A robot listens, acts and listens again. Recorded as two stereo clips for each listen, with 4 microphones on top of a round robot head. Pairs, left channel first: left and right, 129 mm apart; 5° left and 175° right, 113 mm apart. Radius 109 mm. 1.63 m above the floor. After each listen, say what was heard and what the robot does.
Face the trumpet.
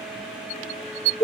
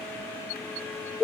Keep listening.
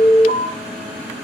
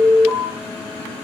Keep listening.
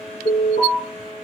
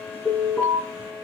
I can't make out a trumpet to turn to.